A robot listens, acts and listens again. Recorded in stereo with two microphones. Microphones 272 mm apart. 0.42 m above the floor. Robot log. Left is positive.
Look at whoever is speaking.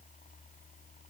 cmd idle
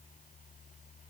cmd idle
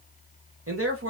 note: The man speaking: about 55° right or 125° right.
cmd yaw -55
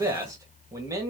note: So it is at 15° right.
cmd yaw -15
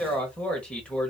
end: Found it: a man speaking, straight ahead, 1 to 2 m away.